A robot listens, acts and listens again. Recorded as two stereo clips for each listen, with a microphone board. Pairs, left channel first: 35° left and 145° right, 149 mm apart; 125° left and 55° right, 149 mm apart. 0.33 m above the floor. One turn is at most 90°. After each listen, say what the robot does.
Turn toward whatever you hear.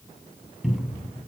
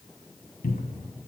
Turn 90° left.
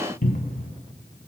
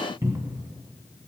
Turn 15° left.
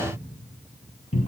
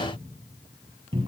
Found it: a cupboard door, straight ahead.